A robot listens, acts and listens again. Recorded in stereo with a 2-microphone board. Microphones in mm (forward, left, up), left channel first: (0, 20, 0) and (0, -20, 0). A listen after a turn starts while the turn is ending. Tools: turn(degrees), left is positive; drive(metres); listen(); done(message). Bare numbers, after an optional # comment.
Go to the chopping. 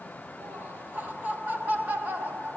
listen()
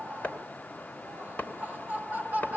# The chopping: about 35° left or 145° left.
turn(35)
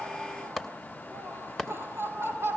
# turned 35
drive(1.0)
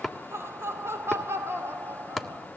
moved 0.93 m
drive(1.0)
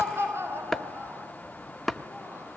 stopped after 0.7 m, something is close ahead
done("I am next to the chopping.")